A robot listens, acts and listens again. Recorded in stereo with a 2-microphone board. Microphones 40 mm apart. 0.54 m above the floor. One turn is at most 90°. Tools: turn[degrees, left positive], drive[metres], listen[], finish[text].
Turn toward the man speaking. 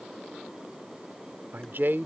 Thought: The man speaking: about 60° right or 120° right.
Action: turn[-60]
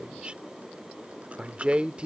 Thought: So it is at 35° right.
Action: turn[-35]
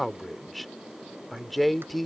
Action: finish[Found it: a man speaking, straight ahead.]